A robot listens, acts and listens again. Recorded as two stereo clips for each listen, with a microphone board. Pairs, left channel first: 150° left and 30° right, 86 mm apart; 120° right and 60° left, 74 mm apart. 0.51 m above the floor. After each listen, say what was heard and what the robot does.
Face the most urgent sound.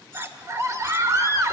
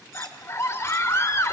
The scream: 75° right. Turn 75° right.
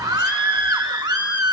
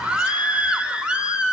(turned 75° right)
The scream is now 15° right. Turn 15° right.
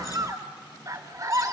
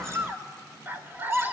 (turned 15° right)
Facing the scream, 1 to 2 m away.